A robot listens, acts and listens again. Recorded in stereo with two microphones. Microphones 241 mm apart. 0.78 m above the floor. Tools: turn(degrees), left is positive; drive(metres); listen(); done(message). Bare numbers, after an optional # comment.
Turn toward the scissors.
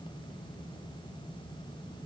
listen()
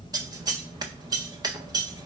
# The scissors: about 15° right or 165° right.
turn(-15)
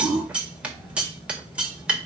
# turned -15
done("Found it: scissors, straight ahead.")